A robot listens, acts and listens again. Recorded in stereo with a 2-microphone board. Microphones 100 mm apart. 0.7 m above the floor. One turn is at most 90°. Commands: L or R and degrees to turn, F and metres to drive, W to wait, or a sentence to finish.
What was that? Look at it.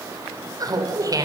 R35
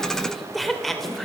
Found it: laughter, straight ahead, 2 to 4 m away.